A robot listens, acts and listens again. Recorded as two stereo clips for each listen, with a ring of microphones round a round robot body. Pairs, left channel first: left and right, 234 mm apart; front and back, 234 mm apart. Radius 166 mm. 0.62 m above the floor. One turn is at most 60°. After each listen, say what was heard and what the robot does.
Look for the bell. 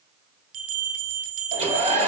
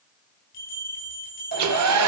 The bell: 65° right. Turn 60° right.
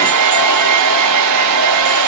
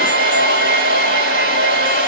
Keep listening.
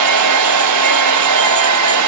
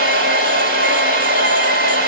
Keep listening.
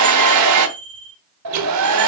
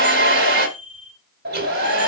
The bell is now 20° right. Turn 20° right.
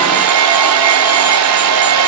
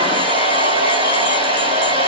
Keep listening.
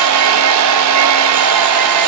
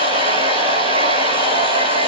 Keep listening.
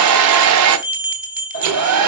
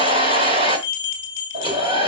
Found it: a bell, straight ahead, 2 to 4 m away.